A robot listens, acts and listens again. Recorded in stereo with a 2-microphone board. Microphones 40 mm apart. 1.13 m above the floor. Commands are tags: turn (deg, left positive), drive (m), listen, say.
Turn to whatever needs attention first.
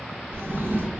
<listen/>
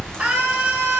<turn deg="-35"/>
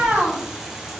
<turn deg="-110"/>
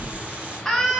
<turn deg="15"/>
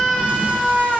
<say>Found it: a scream, straight ahead.</say>